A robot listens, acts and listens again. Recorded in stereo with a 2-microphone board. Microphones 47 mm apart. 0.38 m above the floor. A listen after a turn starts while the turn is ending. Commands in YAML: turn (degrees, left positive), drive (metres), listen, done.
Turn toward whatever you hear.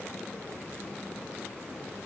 listen: true
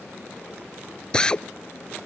turn: 20
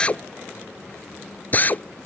turn: 145
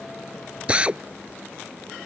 turn: -25
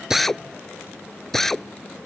done: "Found it: a drill, straight ahead."